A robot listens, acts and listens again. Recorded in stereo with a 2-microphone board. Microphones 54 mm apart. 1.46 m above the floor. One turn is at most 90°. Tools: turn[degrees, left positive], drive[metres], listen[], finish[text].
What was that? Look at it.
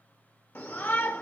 Thought: The shout: about 45° left or 135° left.
Action: turn[45]
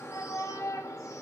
Thought: So it is at 85° left.
Action: turn[85]
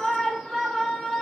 Action: finish[Found it: a shout, straight ahead, 1 to 2 m away.]